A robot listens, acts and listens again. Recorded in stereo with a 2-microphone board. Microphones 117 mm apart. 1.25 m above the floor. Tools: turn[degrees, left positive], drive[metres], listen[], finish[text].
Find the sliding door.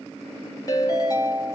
Action: listen[]
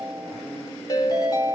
Action: listen[]
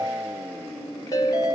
Action: finish[I can't make out a sliding door to turn to.]